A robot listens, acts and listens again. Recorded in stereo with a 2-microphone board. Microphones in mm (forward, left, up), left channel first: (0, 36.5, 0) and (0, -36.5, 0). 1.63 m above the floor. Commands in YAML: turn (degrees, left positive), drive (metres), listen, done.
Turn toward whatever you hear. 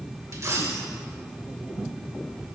turn: -45
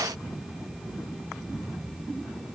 listen: true
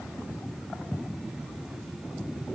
done: "I heard a dropped coin, but can't make it out now. It was about straight ahead or 90° right."